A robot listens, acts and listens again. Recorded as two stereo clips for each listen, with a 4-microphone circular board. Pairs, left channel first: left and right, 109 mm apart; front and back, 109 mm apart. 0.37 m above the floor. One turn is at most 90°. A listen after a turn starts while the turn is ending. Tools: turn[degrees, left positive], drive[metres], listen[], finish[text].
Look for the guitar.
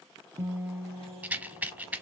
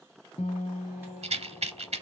Thought: The guitar: 20° right.
Action: turn[-20]
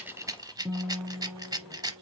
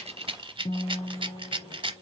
Action: finish[Found it: a guitar, straight ahead, under 1 m away.]